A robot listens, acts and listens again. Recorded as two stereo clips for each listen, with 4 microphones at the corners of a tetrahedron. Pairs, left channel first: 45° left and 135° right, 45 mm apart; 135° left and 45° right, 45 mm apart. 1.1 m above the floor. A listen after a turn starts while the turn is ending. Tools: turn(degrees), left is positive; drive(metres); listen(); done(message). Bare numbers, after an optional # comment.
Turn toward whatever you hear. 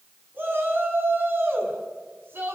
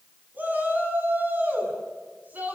# The shout: 95° right.
turn(-95)
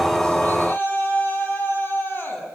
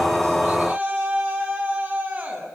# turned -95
done("Facing the shout.")